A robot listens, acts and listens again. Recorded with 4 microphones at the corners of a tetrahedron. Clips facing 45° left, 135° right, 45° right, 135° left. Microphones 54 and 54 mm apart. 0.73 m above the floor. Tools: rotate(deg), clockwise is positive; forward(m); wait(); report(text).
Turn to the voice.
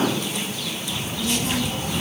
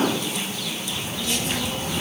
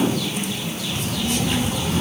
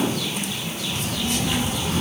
rotate(-60)
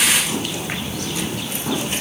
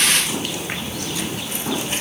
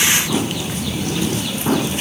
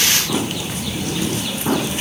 rotate(15)
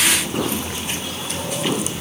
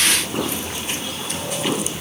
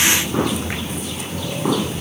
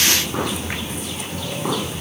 report("Facing the child speaking, over 4 m away.")